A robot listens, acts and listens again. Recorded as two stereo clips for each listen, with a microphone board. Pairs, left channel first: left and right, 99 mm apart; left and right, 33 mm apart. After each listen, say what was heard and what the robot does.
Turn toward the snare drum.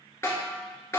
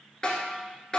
The snare drum: about 25° left or 155° left. Turn 25° left.
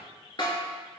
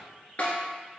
So it is at 130° left. Turn 130° left.
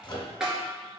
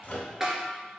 Found it: a snare drum, straight ahead.